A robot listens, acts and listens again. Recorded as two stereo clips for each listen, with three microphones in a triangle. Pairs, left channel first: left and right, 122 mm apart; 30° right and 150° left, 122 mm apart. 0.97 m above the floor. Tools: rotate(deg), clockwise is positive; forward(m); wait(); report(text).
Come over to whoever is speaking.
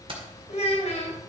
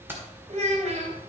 rotate(-120)
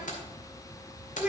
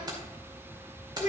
rotate(10)
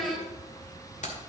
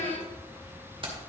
forward(1.0)
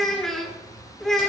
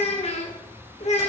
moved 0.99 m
forward(1.0)
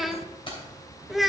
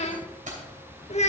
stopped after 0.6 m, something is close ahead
report("Arrived at the child speaking, straight ahead.")